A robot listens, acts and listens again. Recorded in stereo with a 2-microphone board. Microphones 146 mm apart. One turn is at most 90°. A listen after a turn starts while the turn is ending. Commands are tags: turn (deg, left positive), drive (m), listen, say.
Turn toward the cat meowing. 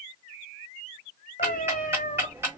<turn deg="70"/>
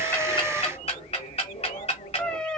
<say>Facing the cat meowing.</say>